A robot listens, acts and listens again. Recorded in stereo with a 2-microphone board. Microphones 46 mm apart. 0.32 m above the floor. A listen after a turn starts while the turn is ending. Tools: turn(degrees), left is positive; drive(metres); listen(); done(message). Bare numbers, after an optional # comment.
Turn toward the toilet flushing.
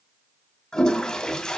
turn(30)
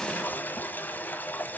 # So it is at 135° left.
turn(135)
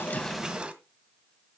# The toilet flushing is now 25° right.
turn(-25)
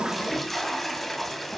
done("Facing the toilet flushing.")